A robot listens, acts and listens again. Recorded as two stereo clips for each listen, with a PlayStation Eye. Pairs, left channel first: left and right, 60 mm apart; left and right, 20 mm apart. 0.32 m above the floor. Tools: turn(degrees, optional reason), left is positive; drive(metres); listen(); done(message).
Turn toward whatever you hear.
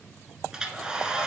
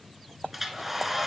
turn(degrees=-30)
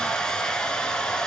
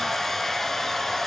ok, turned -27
turn(degrees=15, reason="So it is at 15° left.")
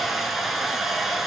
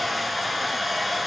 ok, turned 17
done("Found it: a hair dryer, straight ahead, under 1 m away.")